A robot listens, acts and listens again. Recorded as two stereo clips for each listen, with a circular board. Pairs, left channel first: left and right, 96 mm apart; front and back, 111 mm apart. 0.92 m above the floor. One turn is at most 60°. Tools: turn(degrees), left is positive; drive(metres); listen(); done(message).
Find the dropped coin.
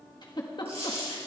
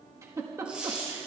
turn(degrees=-60)
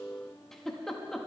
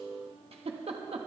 turn(degrees=-40)
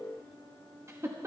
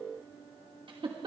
done("I heard a dropped coin from this way, but can't make it out now.")